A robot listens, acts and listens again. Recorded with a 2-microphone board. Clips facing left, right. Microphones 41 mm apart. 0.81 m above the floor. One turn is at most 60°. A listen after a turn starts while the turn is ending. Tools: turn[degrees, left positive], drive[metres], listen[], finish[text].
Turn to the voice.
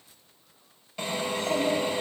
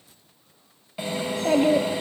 Thought: The child speaking: about 60° right or 120° right.
Action: turn[-60]
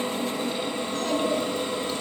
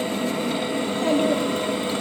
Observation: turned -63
Thought: So it is at 25° right.
Action: turn[-25]
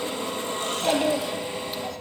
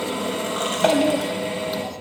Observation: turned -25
Action: finish[Facing the child speaking.]